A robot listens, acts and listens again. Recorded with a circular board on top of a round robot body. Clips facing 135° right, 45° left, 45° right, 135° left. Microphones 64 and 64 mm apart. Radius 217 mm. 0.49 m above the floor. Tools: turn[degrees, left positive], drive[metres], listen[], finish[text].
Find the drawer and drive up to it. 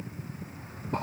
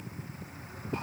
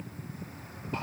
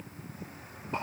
Action: listen[]
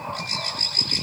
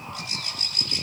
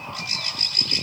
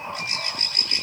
Action: listen[]
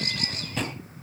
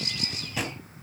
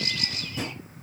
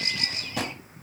Thought: The drawer: 130° left.
Action: turn[130]
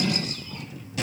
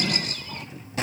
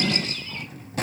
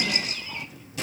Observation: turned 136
Action: drive[1.0]
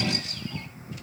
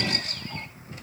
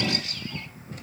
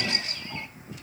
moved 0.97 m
Action: listen[]
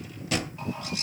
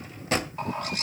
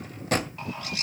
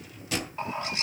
Action: drive[1.0]
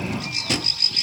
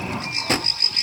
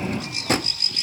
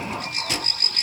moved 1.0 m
Action: drive[1.0]
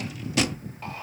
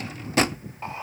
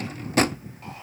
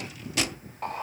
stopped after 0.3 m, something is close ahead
Action: finish[Arrived at the drawer, straight ahead.]